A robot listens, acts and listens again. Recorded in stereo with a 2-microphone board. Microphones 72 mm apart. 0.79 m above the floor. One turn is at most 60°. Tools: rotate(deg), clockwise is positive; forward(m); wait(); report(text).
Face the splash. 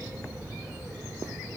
wait()
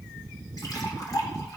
rotate(-60)
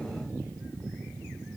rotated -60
wait()
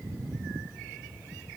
report("I heard a splash, but can't make it out now. It was about straight ahead or 60° left.")